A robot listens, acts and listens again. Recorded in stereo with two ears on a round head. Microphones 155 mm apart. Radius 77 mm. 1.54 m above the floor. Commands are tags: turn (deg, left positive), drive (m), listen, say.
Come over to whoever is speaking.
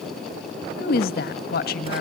<turn deg="55"/>
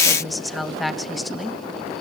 <drive m="1.0"/>
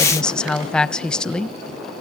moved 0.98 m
<drive m="1.0"/>
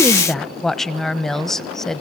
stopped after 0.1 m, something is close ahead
<say>Arrived at the woman speaking, straight ahead.</say>